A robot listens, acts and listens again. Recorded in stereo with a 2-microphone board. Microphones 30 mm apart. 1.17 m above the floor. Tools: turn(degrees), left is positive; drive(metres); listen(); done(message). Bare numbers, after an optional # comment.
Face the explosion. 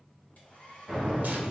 turn(-30)
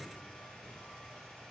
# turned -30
listen()
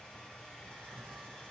done("I heard an explosion, but can't make it out now. It was about 20° left or 140° right.")